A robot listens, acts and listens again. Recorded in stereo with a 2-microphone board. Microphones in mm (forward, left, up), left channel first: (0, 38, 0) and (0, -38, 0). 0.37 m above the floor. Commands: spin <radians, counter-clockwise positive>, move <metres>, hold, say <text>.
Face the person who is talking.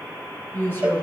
spin 0.52
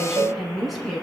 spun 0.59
say Found it: a woman speaking, straight ahead.